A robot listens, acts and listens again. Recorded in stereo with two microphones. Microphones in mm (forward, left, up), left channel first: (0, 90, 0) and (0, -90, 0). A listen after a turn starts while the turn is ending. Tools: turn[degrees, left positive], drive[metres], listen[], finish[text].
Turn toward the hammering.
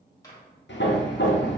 Action: turn[90]
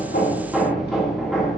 Action: finish[Found it: hammering, straight ahead.]